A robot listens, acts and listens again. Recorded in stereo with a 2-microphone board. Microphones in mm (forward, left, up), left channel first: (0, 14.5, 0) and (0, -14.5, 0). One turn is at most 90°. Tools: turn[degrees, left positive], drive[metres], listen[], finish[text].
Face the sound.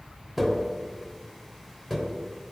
Action: turn[-30]
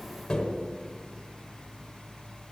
Thought: So it is at 20° left.
Action: turn[20]
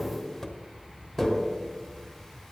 Action: finish[Found it: tapping, straight ahead, 1 to 2 m away.]